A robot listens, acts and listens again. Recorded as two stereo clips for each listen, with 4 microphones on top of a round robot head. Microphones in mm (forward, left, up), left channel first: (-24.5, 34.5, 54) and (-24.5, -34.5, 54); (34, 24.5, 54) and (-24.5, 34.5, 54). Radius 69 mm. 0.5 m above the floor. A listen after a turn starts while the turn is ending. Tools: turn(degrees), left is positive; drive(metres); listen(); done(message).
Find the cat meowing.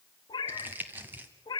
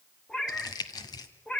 turn(degrees=60)
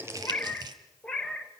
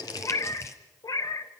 done("Found it: a cat meowing, straight ahead, 1 to 2 m away.")